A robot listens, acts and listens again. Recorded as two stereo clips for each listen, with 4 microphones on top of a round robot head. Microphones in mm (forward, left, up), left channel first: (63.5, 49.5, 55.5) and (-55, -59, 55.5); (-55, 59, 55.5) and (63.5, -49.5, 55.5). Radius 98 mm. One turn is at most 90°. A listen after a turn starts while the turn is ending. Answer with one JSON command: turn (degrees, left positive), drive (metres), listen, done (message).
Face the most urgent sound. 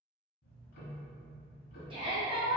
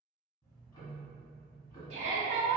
{"turn": -85}
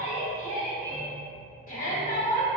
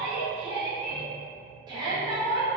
{"turn": 20}
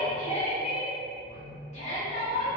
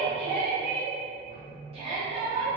{"done": "Facing the shout."}